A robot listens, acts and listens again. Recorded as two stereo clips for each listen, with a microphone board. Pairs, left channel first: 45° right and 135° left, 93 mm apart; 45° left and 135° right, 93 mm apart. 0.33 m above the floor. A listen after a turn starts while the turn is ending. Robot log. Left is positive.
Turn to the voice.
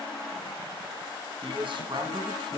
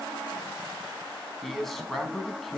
note: The man speaking: 135° left.
cmd yaw +135
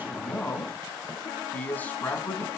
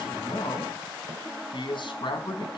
note: The man speaking is now 25° left.
cmd yaw +25
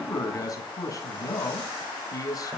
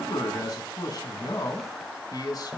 end: Facing the man speaking.